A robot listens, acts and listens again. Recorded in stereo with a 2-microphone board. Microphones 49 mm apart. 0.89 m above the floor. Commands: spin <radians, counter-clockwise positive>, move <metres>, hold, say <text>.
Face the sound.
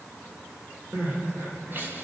spin -0.70
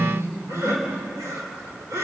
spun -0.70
spin -1.66
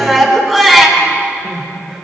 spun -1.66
say Facing the crying, 2 to 4 m away.